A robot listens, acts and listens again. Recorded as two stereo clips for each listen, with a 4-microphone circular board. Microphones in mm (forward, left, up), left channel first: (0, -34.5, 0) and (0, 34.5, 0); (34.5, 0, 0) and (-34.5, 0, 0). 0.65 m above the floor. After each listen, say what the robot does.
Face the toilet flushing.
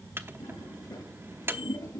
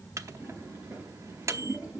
Turn 105° right.
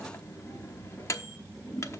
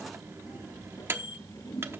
Turn 15° right.
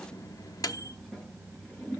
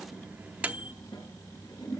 Facing the toilet flushing, over 4 m away.